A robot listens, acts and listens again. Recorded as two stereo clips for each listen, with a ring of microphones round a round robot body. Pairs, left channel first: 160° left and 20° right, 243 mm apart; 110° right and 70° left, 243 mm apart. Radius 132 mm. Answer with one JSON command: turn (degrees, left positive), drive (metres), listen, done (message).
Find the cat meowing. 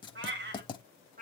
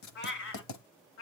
{"turn": -80}
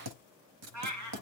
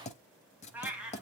{"turn": -20}
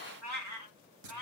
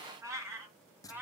{"turn": -15}
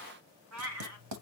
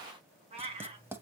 {"done": "Found it: a cat meowing, straight ahead."}